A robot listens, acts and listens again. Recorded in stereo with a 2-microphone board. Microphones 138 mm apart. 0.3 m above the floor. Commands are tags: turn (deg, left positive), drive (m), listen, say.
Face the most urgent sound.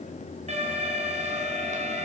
<turn deg="-50"/>
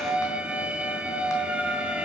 <turn deg="-10"/>
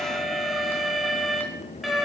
<say>Found it: an alarm, straight ahead.</say>